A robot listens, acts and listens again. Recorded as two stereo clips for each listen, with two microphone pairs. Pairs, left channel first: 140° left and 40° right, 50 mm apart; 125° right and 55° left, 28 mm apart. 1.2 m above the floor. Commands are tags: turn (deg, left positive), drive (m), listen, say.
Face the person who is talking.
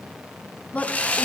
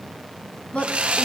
<turn deg="-155"/>
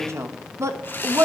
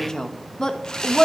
<turn deg="-55"/>
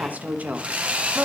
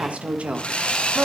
<turn deg="25"/>
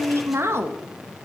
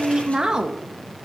<say>Found it: a woman speaking, straight ahead, 1 to 2 m away.</say>